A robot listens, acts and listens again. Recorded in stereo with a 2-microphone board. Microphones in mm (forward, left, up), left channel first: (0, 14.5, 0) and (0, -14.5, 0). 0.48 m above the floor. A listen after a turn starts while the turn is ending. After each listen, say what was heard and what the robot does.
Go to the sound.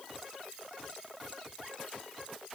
Keep listening.
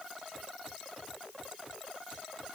Keep listening.
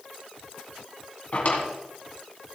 The drawer: about 50° left or 130° left. Turn 50° left.
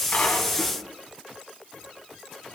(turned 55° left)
Keep listening.
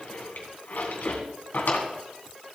So it is at 75° left. Turn 75° left.
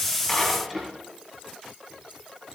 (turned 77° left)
Drive 1.0 m forward.
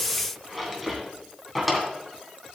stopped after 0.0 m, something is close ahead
Blocked. The drawer is further on, straight ahead.